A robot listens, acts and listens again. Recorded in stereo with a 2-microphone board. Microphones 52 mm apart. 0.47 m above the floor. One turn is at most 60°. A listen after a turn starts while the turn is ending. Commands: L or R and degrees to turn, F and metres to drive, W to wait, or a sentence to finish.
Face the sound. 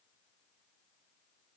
W
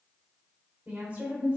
R30
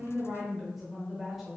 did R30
Facing the woman speaking.